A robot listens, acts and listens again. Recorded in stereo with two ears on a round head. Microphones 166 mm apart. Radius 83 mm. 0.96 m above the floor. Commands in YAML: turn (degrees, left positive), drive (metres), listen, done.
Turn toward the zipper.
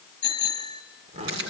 turn: -40
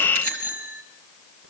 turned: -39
listen: true
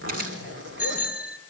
turn: -100
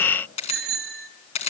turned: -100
listen: true
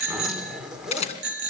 done: "Found it: a zipper, straight ahead, 2 to 4 m away."